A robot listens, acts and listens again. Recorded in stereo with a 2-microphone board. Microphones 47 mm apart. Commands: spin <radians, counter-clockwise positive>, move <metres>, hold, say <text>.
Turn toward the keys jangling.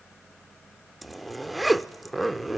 hold
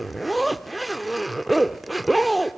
hold
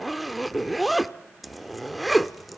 say I can't make out keys jangling, only a zipper.